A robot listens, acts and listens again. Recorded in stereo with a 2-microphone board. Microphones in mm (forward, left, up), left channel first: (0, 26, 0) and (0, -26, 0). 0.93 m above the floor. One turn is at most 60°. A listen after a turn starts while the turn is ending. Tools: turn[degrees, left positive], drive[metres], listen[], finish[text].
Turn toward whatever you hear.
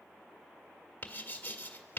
Thought: The writing: about 35° left or 145° left.
Action: turn[35]
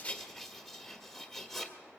Action: finish[Facing the writing, 1 to 2 m away.]